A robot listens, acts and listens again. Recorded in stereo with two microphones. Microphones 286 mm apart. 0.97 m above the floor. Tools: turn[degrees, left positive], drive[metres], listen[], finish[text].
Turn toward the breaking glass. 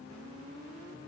Action: listen[]
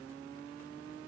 Action: listen[]
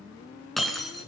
Action: turn[30]
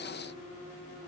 Action: listen[]
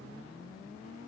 Action: finish[I heard breaking glass, but can't make it out now. It was about 30° right or 150° left.]